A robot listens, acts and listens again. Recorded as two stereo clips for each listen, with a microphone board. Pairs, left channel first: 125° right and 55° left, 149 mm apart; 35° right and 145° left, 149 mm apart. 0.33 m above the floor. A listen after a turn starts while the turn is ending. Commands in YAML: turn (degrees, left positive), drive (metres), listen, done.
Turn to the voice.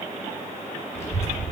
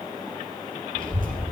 turn: 165
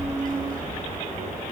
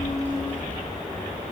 turn: 40
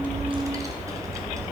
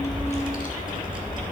turn: -10
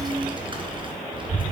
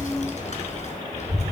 done: "Facing the child speaking."